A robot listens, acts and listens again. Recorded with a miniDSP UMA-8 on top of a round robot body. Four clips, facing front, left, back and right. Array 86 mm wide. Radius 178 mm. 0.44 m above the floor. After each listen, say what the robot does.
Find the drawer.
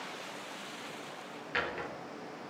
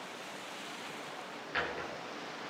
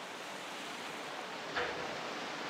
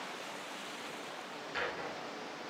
Turn 20° left.
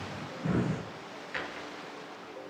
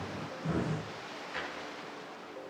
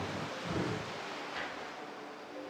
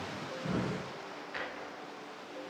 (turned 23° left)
Facing the drawer, over 4 m away.